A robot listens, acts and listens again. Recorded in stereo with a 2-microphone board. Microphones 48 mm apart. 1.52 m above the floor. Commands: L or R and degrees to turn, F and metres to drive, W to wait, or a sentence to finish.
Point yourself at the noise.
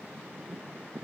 W
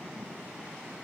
W
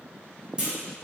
R20
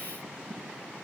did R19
W
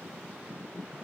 I heard a clunk, but can't make it out now. It was about straight ahead or 140° right.